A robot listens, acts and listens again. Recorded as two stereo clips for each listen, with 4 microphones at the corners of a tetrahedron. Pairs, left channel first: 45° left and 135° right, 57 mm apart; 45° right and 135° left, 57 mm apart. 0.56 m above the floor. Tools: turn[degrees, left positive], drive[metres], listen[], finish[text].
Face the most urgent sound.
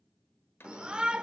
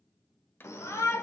Thought: The shout: 65° right.
Action: turn[-65]
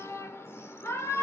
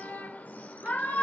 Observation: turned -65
Thought: The shout is now 10° left.
Action: turn[10]
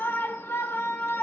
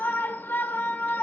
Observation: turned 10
Action: finish[Found it: a shout, straight ahead.]